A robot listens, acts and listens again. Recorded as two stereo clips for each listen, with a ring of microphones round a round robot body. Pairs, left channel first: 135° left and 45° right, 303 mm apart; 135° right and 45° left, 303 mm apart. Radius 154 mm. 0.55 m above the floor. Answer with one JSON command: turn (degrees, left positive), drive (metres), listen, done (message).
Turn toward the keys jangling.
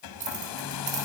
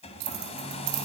{"turn": 25}
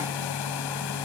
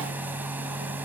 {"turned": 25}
{"listen": true}
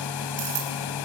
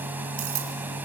{"done": "Facing the keys jangling."}